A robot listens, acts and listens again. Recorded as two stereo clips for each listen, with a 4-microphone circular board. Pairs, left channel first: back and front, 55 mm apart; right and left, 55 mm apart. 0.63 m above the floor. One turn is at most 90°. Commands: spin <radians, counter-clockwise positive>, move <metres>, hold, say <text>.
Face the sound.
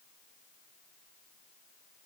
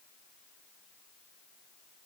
hold
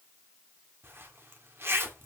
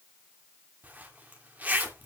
spin 0.61
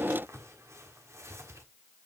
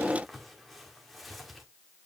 say Found it: a zipper, straight ahead.